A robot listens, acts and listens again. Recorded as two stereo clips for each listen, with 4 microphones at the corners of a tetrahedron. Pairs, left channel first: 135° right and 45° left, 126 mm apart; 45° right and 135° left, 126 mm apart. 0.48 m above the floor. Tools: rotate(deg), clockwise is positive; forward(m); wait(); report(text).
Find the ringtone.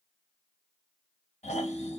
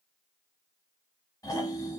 rotate(-150)
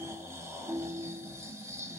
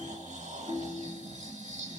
rotate(-10)
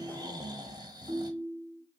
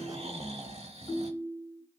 report("Facing the ringtone.")